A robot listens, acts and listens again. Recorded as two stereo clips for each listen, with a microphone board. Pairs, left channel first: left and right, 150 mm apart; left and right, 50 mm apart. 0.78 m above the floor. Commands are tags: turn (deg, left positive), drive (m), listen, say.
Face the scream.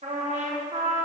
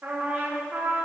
<listen/>
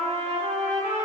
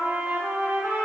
<listen/>
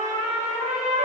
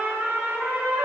<say>I can't make out a scream to turn to.</say>